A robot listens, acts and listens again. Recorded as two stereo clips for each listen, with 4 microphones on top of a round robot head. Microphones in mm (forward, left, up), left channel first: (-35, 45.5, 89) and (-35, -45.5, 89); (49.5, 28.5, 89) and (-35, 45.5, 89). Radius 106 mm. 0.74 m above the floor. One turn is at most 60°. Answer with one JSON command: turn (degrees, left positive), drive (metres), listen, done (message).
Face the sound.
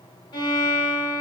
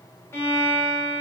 {"turn": 50}
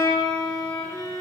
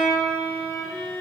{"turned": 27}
{"turn": 20}
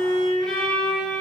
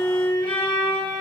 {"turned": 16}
{"done": "Found it: a violin, straight ahead."}